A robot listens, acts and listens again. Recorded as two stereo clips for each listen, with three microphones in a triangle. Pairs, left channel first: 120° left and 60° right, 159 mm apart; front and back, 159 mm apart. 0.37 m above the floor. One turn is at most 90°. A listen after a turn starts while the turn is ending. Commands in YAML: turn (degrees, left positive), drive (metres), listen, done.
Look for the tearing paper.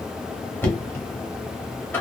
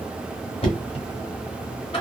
listen: true
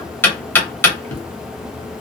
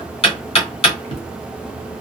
listen: true
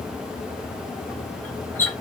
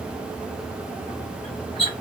done: "I can't make out tearing paper, only knocking."